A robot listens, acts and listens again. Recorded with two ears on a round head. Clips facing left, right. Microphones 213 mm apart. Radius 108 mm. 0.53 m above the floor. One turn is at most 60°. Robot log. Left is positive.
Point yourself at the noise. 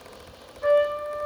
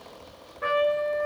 note: The trumpet: about 65° right or 115° right.
cmd yaw -60
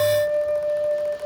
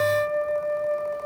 note: So it is at 20° right.
cmd yaw -20
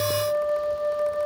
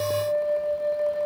end: Found it: a trumpet, straight ahead, under 1 m away.